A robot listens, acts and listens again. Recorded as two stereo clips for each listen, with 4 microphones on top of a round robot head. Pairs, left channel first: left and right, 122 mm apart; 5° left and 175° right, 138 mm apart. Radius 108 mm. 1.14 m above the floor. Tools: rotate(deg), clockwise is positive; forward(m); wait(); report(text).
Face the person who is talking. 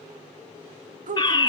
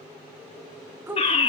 rotate(95)
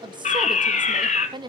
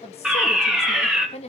rotate(40)
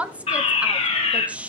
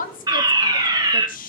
rotate(10)
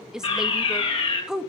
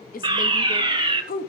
report("Found it: a woman speaking, straight ahead.")